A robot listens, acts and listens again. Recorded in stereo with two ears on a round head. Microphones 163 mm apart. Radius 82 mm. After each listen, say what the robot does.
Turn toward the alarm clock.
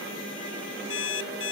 Turn 70° left.
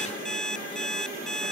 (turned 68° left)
Found it: an alarm clock, straight ahead.